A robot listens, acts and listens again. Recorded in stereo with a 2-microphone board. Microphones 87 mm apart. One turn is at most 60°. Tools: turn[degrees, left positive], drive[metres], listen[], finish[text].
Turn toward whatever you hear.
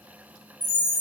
Thought: The chime: about 40° right or 140° right.
Action: turn[-40]
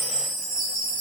Thought: So it is at 100° right.
Action: turn[-60]
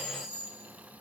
Thought: The chime is now 50° right.
Action: turn[-50]
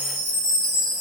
Action: finish[Found it: a chime, straight ahead.]